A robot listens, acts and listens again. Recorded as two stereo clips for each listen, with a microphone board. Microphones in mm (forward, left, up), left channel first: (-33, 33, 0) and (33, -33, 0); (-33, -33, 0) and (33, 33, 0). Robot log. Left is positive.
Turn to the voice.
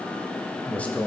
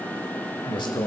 note: The man speaking: 155° right.
cmd yaw -155
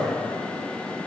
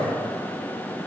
note: The man speaking is now 60° right.
cmd yaw -60
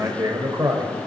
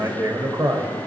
end: Found it: a man speaking, straight ahead.